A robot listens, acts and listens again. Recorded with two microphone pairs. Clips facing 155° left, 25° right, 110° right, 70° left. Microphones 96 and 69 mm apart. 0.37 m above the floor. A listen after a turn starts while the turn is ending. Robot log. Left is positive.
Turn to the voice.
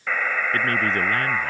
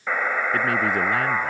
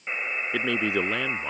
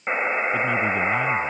note: The man speaking: 110° right.
cmd yaw -110
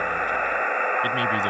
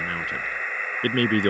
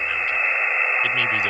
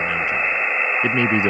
note: The man speaking is now 10° left.
cmd yaw +10
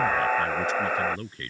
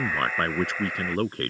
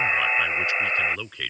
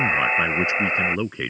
end: Facing the man speaking.